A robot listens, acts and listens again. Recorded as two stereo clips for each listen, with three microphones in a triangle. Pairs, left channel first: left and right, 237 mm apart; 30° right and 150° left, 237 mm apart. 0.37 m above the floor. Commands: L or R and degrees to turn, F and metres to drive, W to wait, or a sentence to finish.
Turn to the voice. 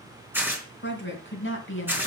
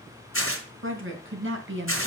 L120
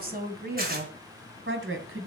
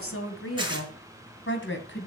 R65
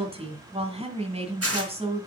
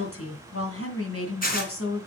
R25
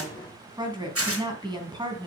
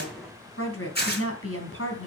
R20
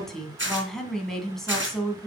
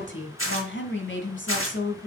Facing the woman speaking, 2 to 4 m away.